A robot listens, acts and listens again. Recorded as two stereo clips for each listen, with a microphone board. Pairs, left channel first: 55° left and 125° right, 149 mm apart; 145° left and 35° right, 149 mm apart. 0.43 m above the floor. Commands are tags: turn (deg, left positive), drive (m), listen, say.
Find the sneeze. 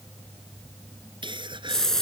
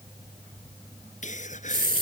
<turn deg="180"/>
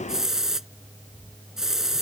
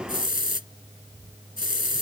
<say>Facing where the sneeze came from. I can't hear it now.</say>